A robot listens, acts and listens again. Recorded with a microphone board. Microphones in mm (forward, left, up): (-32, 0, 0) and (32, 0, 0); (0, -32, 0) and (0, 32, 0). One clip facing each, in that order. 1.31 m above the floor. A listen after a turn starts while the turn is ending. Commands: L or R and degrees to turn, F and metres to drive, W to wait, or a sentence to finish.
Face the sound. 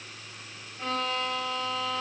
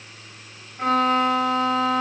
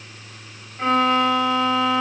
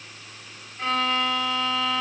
R20
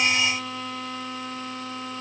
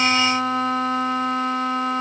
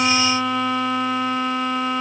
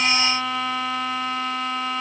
Found it: a violin, straight ahead, 1 to 2 m away.